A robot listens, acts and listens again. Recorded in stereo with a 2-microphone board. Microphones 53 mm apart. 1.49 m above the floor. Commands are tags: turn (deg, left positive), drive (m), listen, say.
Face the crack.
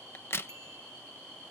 <turn deg="50"/>
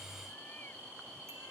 <listen/>
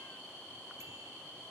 <say>I heard a crack, but can't make it out now. It was about straight ahead or 80° left.</say>